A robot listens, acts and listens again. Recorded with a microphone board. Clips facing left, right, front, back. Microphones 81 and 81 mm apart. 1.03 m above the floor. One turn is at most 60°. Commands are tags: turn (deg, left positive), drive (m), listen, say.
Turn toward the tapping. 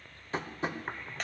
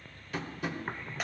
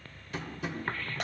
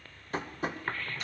<turn deg="60"/>
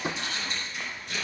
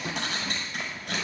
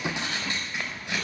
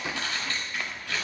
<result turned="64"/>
<turn deg="60"/>
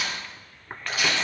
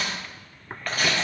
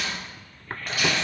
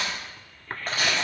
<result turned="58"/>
<turn deg="15"/>
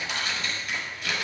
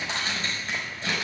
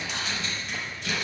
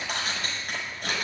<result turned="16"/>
<listen/>
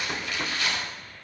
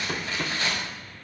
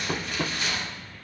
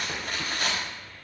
<say>Found it: tapping, straight ahead.</say>